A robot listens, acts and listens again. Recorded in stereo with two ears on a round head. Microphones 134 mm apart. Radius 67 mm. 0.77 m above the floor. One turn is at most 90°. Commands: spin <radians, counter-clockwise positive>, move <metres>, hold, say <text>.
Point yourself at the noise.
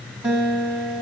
spin -0.52
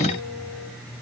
hold
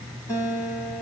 spin 0.35
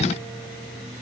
hold
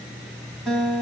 say Found it: a guitar, straight ahead.